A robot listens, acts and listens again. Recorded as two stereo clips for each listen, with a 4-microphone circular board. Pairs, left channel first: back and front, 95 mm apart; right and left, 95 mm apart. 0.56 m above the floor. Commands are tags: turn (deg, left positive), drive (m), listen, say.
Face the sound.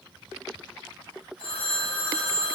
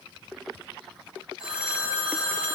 <turn deg="165"/>
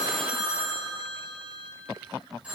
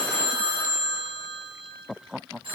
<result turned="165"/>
<turn deg="75"/>
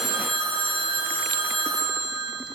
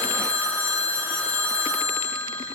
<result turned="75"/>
<turn deg="15"/>
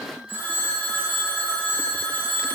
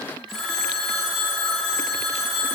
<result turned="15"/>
<say>Found it: a phone ringing, straight ahead, 2 to 4 m away.</say>